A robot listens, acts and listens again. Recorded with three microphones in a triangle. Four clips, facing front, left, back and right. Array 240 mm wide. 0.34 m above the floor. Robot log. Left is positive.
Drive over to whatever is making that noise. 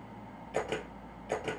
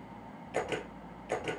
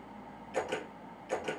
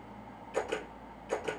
note: The camera shutter: 15° left.
cmd yaw +15
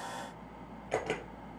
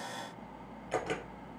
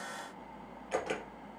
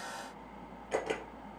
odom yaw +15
cmd fwd 1.0
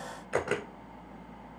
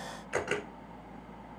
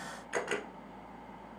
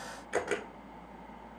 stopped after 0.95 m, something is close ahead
note: The camera shutter is now 10° right.
cmd yaw -10
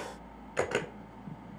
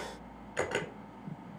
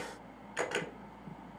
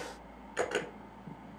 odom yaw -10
end: I am next to the camera shutter.